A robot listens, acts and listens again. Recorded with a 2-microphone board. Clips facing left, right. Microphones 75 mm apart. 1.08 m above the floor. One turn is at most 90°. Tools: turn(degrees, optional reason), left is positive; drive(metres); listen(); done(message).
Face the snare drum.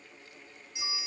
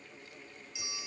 listen()
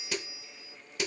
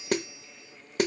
turn(degrees=-50, reason="The snare drum: about 50° right or 130° right.")
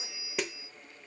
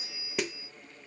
done("Facing the snare drum.")